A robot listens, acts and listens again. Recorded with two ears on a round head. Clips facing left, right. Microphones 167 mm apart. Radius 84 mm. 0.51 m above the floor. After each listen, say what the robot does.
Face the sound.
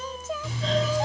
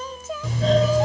Turn 40° right.
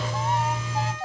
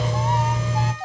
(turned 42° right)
Turn 90° right.
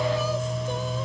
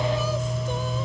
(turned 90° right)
Found it: a doorbell, straight ahead.